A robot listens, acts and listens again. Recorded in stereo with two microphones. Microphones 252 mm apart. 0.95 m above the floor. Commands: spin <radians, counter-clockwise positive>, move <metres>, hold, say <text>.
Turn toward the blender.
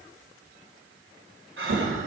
hold
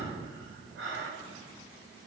hold
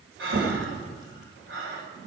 say I can't make out a blender to turn to.